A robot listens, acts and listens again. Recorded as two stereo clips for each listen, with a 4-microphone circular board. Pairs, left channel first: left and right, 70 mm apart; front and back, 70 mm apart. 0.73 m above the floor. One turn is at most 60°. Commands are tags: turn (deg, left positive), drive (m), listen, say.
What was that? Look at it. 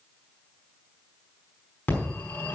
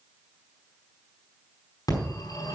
<turn deg="25"/>
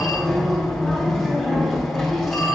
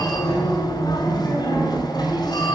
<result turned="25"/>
<say>Found it: a phone ringing, straight ahead, over 4 m away.</say>